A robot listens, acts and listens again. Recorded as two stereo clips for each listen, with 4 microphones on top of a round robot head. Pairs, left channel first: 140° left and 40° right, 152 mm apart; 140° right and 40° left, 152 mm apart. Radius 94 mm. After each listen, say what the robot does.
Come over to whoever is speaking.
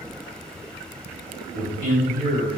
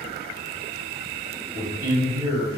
Turn 30° right.
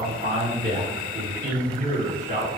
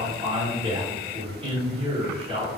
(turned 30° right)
Drive 1.0 m forward.
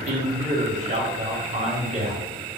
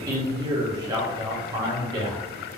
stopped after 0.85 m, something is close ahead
Turn 15° right.
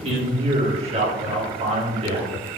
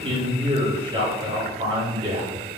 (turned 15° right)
Arrived at the man speaking, straight ahead.